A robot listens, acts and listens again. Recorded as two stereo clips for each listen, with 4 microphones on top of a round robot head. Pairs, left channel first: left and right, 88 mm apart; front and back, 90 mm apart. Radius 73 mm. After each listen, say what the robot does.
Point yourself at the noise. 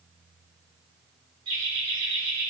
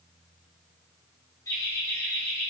Turn 70° right.
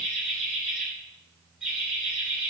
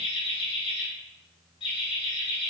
Turn 15° right.
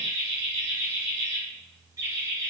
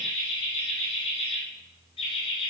Turn 20° right.
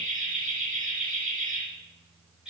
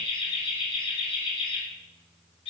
Facing the laughter.